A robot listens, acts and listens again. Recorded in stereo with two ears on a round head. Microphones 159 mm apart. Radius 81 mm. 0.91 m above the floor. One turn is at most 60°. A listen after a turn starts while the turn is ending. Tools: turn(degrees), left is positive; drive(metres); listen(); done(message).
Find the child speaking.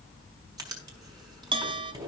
listen()
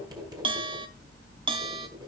listen()
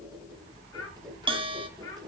turn(degrees=20)
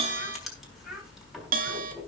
done("Found it: a child speaking, straight ahead.")